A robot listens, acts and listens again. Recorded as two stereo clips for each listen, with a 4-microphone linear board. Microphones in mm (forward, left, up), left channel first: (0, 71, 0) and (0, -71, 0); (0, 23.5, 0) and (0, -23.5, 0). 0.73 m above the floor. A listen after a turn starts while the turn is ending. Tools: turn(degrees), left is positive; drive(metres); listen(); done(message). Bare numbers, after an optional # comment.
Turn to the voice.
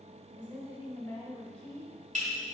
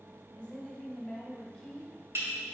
turn(30)
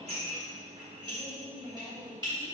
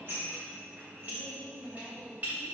turn(30)
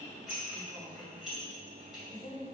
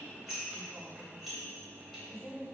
# So it is at 155° left.
turn(155)
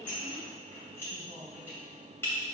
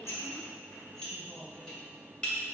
listen()
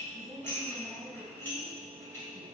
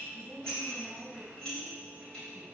# The woman speaking is now 10° right.
turn(-10)
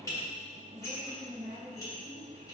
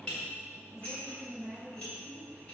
done("Facing the woman speaking.")